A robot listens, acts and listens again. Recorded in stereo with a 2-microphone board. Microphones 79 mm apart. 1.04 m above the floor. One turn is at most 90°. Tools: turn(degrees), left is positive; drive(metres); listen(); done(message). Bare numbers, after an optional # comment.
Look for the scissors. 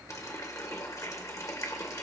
listen()
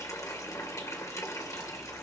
listen()
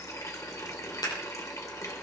# The scissors: about 55° left or 125° left.
turn(55)
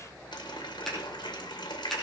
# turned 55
done("Found it: scissors, straight ahead, over 4 m away.")